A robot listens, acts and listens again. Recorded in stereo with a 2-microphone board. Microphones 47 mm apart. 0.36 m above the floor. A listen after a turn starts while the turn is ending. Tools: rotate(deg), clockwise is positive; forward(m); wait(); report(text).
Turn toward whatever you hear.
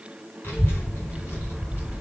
rotate(-60)
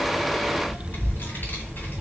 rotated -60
rotate(-50)
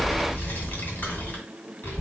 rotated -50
rotate(-45)
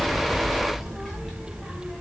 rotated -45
report("Facing the child speaking, 2 to 4 m away.")